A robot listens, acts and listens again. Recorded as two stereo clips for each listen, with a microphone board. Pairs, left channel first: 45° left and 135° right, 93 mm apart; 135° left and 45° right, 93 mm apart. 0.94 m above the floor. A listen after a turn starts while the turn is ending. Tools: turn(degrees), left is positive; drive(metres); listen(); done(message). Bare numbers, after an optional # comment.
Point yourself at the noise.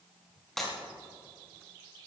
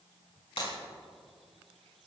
# The breaking glass: 130° left.
turn(130)
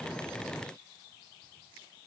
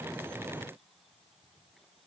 done("Facing where the breaking glass came from. I can't hear it now.")